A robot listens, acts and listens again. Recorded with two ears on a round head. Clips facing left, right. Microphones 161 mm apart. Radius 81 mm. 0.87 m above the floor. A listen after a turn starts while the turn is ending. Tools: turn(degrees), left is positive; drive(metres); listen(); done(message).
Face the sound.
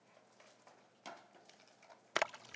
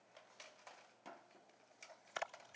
turn(degrees=70)
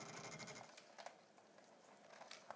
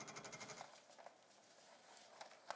listen()
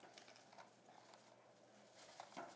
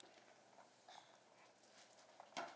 done("I heard a splash, but can't make it out now. It was about straight ahead or 40° left.")